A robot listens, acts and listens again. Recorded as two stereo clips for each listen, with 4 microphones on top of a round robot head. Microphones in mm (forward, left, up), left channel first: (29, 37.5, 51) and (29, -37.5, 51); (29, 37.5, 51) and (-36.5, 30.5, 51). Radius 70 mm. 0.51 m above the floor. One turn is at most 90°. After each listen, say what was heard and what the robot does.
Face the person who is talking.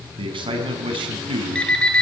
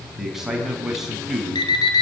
The man speaking: 90° right. Turn 90° right.
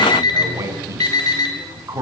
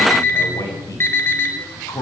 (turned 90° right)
The man speaking is now 40° right. Turn 40° right.
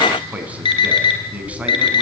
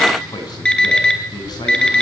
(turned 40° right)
The man speaking is now 15° right. Turn 15° right.
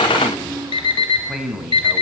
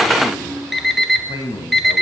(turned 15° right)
Facing the man speaking, over 4 m away.